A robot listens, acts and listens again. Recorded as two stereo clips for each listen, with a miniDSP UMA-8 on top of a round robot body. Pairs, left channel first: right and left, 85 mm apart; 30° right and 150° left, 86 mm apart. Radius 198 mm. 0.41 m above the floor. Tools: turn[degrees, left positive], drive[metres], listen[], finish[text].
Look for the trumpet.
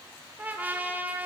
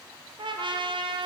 Thought: The trumpet: 160° left.
Action: turn[160]
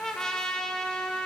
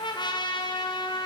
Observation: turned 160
Action: finish[Found it: a trumpet, straight ahead.]